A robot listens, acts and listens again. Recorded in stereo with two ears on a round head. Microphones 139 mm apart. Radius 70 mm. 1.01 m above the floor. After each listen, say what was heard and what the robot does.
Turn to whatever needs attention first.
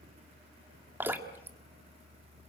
Keep listening.
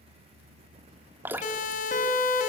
The siren: about 50° left or 130° left. Turn 50° left.
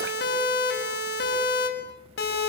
So it is at 75° left. Turn 75° left.
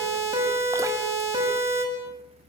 The siren is now 15° right. Turn 15° right.
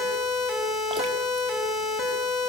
Found it: a siren, straight ahead, over 4 m away.